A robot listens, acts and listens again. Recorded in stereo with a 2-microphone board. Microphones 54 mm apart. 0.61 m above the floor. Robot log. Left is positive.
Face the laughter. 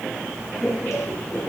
note: The laughter: about 30° left or 150° left.
cmd yaw +30
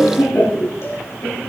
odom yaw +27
note: So it is at 125° left.
cmd yaw +125
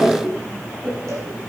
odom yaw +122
end: Found it: laughter, straight ahead.